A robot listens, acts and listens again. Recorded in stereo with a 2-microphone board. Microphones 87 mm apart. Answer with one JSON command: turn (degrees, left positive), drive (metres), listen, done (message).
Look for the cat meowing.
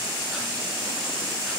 {"listen": true}
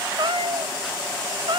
{"turn": -65}
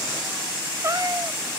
{"turn": -40}
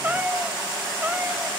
{"turn": -15}
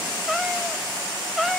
{"done": "Found it: a cat meowing, straight ahead."}